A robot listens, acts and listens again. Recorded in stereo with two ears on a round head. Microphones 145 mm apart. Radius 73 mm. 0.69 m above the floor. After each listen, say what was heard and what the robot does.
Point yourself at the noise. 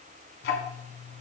The ticking: about 75° left or 105° left. Turn 75° left.
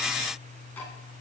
So it is at 10° left. Turn 10° left.
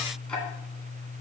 Found it: ticking, straight ahead.